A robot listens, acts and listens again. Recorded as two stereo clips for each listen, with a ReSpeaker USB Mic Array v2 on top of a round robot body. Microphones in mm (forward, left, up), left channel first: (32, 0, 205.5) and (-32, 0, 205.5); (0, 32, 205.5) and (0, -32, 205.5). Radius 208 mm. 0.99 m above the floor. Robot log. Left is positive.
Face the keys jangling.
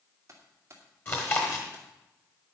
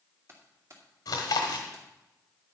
note: The keys jangling: 130° right.
cmd yaw -130
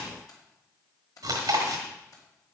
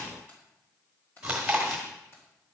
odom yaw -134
note: The keys jangling is now 35° left.
cmd yaw +35
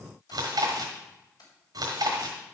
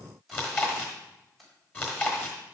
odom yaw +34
end: Facing the keys jangling, over 4 m away.